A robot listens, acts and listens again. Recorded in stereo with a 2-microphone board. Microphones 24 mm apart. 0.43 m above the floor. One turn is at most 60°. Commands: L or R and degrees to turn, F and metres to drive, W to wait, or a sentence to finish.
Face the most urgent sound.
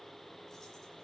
W
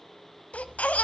L60
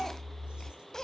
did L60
L25
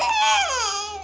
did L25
Facing the baby crying.